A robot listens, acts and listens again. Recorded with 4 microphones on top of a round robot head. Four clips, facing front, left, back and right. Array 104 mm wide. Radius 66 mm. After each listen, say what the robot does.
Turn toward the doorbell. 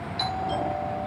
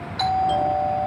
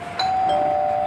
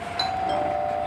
Turn 170° right.
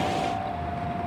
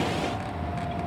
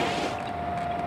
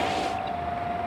Keep listening.
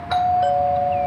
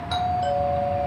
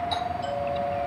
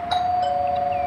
Turn 15° right.
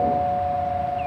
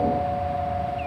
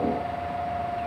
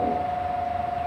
Found it: a doorbell, straight ahead, over 4 m away.